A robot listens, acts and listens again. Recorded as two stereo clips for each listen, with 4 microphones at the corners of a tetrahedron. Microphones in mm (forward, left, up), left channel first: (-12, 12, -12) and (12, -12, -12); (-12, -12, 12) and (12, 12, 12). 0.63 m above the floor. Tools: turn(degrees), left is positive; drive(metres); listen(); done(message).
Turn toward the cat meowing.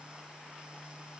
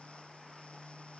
listen()
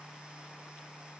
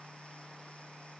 listen()
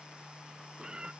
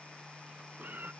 turn(degrees=20)
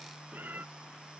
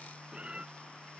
turn(degrees=-15)
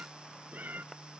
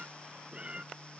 turn(degrees=-10)
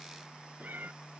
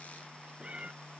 turn(degrees=-10)
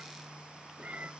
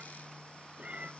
done("Found it: a cat meowing, straight ahead.")